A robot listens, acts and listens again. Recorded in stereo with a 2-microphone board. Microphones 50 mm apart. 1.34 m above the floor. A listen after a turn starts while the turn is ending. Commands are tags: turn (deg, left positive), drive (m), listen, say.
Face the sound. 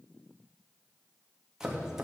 <turn deg="-30"/>
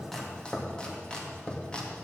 <turn deg="20"/>
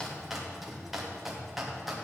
<say>Found it: chopping, straight ahead.</say>